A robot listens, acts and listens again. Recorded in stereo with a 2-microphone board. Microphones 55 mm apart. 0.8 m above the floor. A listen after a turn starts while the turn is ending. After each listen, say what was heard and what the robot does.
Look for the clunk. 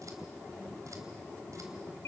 Keep listening.
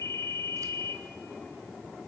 Keep listening.
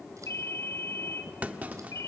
The clunk: about 25° right or 155° right. Turn 25° right.
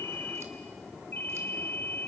Keep listening.
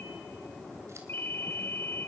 I heard a clunk, but can't make it out now. It was about straight ahead or 130° right.